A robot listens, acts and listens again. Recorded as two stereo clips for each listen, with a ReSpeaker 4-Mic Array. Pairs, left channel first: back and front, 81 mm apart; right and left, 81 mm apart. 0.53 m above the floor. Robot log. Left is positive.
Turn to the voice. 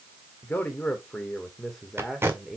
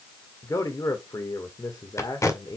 note: The man speaking: 80° right.
cmd yaw -80
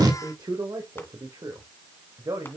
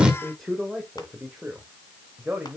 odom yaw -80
note: The man speaking is now 15° left.
cmd yaw +15
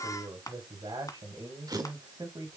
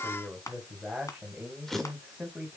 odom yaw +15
end: Facing the man speaking, 2 to 4 m away.